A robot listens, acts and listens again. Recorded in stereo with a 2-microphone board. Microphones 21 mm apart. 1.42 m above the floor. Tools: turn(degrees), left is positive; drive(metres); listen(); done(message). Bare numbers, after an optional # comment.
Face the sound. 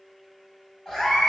# The cat meowing: about 40° left or 140° left.
turn(40)
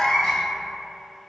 # So it is at 90° left.
turn(90)
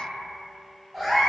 # The cat meowing is now 15° right.
turn(-15)
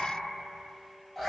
done("Found it: a cat meowing, straight ahead, 1 to 2 m away.")